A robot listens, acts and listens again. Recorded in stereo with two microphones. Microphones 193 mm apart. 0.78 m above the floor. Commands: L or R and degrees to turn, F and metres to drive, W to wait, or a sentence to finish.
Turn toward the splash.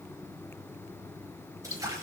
R15
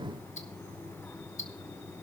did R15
W
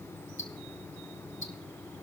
I heard a splash, but can't make it out now. It was about straight ahead or 150° right.